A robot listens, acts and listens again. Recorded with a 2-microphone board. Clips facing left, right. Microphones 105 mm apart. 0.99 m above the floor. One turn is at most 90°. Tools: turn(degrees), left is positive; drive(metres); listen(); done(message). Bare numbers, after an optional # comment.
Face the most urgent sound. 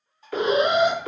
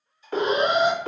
# The alarm: about 25° right or 155° right.
turn(-25)
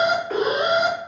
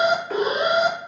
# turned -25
done("Facing the alarm, 1 to 2 m away.")